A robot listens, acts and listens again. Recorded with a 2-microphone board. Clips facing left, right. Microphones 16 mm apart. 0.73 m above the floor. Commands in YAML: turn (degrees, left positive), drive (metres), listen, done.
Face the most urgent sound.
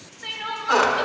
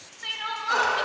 turn: -15
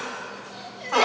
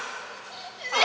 turn: -150
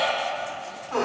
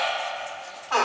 turn: -10
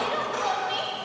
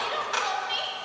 done: "Found it: crying, straight ahead, under 1 m away."